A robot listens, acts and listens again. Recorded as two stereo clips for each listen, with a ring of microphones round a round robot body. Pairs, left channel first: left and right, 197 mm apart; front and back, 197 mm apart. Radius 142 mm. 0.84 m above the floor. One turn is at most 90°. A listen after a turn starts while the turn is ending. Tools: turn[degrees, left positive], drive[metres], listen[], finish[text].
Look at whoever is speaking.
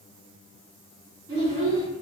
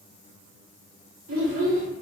Thought: The child speaking: 165° right.
Action: turn[-90]
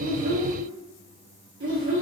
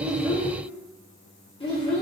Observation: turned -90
Thought: The child speaking is now 65° right.
Action: turn[-65]
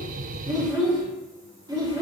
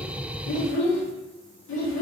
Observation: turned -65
Thought: The child speaking is now 15° right.
Action: turn[-15]
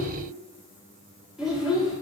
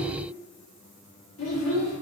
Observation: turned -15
Action: finish[Found it: a child speaking, straight ahead, 1 to 2 m away.]